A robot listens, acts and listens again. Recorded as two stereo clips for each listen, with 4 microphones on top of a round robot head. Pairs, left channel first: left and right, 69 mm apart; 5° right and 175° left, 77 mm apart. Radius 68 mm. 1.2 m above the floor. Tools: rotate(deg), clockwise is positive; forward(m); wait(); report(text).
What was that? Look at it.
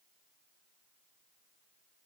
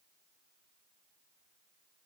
wait()
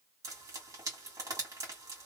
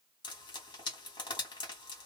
rotate(40)
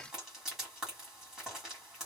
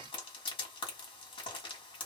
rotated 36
report("Facing the frying.")